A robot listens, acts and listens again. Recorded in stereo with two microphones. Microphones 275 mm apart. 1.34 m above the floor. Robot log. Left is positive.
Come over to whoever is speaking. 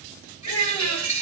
note: The child speaking: about 55° left or 125° left.
cmd yaw +55
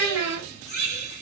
note: So it is at 70° left.
cmd yaw +70
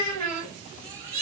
note: The child speaking is now 25° left.
cmd yaw +25
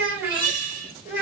note: The child speaking is now 10° right.
cmd yaw -10
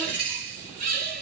cmd idle
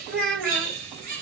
cmd fwd 1.0
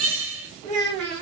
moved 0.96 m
cmd fwd 1.0
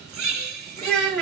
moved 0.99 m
cmd fwd 1.0
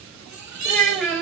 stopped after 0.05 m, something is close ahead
end: I am next to the child speaking.